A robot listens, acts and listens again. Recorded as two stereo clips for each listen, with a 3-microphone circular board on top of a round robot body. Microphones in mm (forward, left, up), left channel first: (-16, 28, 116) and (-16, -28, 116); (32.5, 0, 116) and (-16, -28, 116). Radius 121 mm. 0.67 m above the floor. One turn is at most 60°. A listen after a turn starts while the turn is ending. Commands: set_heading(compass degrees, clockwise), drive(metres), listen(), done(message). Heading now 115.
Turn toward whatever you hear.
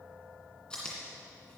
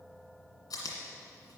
set_heading(100)
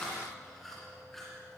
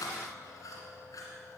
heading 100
done("Found it: chewing, straight ahead.")